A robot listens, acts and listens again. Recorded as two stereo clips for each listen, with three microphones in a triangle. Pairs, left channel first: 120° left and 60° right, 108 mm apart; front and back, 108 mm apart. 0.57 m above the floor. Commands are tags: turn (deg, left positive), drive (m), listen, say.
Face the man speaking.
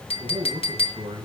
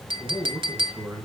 <turn deg="-100"/>
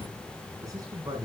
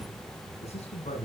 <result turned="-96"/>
<say>Facing the man speaking, over 4 m away.</say>